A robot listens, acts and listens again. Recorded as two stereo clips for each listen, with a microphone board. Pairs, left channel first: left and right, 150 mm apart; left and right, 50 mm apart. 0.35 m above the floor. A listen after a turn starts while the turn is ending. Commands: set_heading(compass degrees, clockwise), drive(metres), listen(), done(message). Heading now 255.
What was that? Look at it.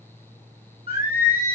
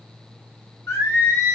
set_heading(185)
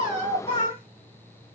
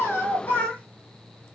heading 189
set_heading(149)
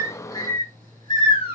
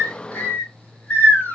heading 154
set_heading(119)
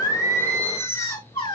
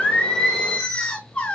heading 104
set_heading(79)
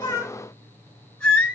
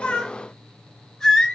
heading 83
done("Facing the singing, 1 to 2 m away.")